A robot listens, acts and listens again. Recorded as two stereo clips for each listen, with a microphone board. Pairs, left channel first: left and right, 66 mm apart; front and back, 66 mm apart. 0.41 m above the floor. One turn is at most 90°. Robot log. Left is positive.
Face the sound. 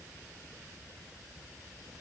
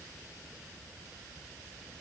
cmd idle
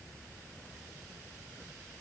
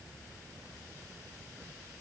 cmd idle
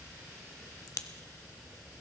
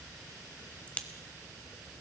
note: The crack: 70° left.
cmd yaw +70
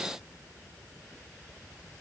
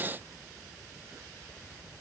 end: I heard a crack from this way, but can't make it out now.